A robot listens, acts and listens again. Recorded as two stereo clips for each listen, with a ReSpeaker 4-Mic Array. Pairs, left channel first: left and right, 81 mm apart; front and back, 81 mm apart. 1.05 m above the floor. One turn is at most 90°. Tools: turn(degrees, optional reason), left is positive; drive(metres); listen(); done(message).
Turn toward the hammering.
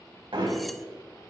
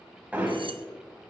turn(degrees=-90, reason="The hammering: 110° right.")
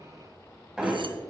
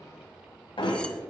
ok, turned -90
turn(degrees=-10, reason="The hammering is now 10° right.")
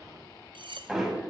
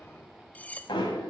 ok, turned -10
done("Found it: hammering, straight ahead, 2 to 4 m away.")